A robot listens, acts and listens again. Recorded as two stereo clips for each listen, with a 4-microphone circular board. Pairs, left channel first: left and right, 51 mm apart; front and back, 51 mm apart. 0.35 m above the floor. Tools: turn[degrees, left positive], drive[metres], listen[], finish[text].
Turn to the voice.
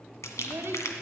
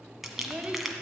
Thought: The child speaking: 115° right.
Action: turn[-115]
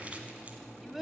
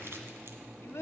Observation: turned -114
Action: finish[Facing the child speaking.]